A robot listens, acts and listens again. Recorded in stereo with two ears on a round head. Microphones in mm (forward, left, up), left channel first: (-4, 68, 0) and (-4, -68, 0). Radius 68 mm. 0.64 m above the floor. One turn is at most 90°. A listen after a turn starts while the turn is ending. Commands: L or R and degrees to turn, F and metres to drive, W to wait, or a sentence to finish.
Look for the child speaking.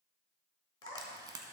R60
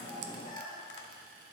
Facing the child speaking.